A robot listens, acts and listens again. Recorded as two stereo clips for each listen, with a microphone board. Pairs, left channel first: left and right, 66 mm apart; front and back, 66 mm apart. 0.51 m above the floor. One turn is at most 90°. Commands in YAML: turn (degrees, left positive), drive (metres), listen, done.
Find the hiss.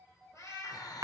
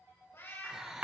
turn: 90
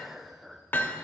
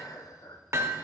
done: "Facing the hiss."